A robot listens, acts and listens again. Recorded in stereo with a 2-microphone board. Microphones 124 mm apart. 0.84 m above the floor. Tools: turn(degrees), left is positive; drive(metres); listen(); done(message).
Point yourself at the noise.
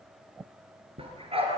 turn(degrees=-50)
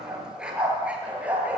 turn(degrees=-10)
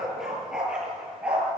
turn(degrees=-10)
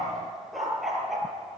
done("Facing the dog barking.")